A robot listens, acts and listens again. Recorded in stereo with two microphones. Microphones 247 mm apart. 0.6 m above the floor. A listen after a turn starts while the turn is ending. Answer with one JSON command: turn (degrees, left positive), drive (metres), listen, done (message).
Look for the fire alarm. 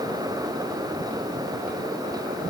{"listen": true}
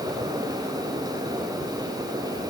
{"listen": true}
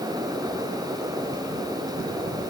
{"done": "I can't make out a fire alarm to turn to."}